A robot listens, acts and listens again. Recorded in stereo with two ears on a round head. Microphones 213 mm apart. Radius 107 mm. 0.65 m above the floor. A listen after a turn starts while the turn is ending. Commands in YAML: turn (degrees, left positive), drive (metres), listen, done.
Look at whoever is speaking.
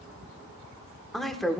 turn: 30
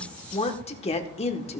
turn: 150
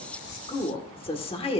turn: 25
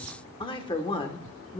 turn: 25
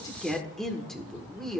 done: "Found it: a woman speaking, straight ahead."